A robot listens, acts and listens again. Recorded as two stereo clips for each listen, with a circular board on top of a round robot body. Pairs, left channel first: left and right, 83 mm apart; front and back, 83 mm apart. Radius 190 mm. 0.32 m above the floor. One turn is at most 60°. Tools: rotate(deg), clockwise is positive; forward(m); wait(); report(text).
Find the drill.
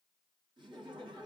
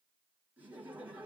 wait()
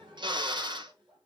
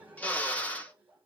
rotate(60)
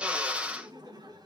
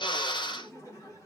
rotate(10)
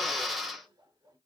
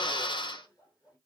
report("Found it: a drill, straight ahead, 1 to 2 m away.")